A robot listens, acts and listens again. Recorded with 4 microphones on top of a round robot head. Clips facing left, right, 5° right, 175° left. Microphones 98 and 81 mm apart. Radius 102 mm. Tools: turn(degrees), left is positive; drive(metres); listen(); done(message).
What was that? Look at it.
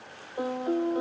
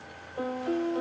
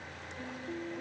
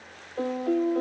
turn(degrees=165)
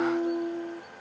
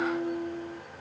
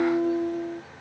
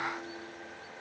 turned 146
turn(degrees=20)
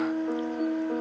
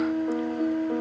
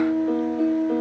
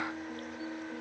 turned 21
done("Facing the piano.")